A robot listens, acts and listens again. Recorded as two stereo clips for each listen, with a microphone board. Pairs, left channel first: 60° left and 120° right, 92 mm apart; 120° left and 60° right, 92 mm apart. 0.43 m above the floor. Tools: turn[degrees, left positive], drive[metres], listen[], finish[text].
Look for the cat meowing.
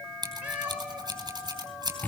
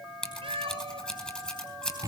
Thought: The cat meowing: 45° right.
Action: turn[-45]
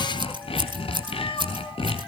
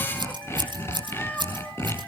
Thought: The cat meowing is now 50° left.
Action: turn[50]
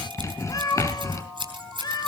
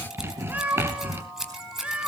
Thought: The cat meowing is now 15° left.
Action: turn[15]
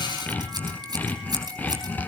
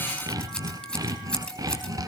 Action: listen[]
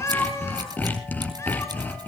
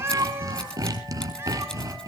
Action: finish[Found it: a cat meowing, straight ahead, 2 to 4 m away.]